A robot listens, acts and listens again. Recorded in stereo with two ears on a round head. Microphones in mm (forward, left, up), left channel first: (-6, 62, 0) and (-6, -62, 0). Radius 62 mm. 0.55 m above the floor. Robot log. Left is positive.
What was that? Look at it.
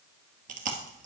note: The chewing: about 65° right or 115° right.
cmd yaw -65
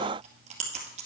note: So it is at 50° right.
cmd yaw -50
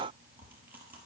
cmd idle
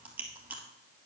note: The chewing is now 15° right.
cmd yaw -15
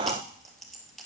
end: Facing the chewing, 2 to 4 m away.